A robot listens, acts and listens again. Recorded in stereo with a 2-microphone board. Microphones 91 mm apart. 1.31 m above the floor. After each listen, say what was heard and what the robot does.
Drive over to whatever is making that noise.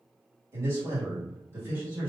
The man speaking: about 25° right or 155° right. Turn 25° right.
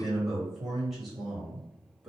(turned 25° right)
Drive 1.0 m forward.
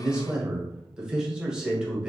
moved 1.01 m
Drive 1.0 m forward.
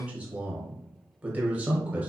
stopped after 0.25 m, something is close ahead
The man speaking is now 15° right. Turn 15° right.
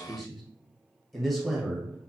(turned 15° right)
I am next to the man speaking.